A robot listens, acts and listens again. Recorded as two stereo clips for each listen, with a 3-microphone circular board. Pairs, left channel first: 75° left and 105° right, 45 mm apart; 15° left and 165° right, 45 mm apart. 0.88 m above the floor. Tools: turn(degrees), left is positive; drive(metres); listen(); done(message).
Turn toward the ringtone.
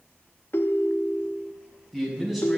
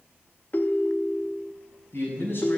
turn(degrees=55)
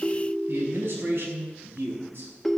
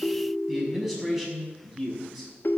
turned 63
done("Facing the ringtone, under 1 m away.")